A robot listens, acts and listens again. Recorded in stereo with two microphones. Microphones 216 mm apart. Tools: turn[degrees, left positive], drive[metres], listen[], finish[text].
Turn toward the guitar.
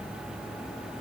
Action: listen[]
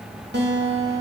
Thought: The guitar: about 55° right or 125° right.
Action: turn[-55]
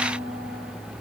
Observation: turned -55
Thought: So it is at 75° right.
Action: turn[-75]
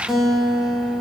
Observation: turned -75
Action: finish[Found it: a guitar, straight ahead, 1 to 2 m away.]